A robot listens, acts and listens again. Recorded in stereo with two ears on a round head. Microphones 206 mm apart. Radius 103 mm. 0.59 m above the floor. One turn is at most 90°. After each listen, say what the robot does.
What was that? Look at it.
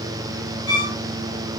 Turn 50° left.
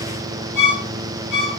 Found it: a violin, straight ahead.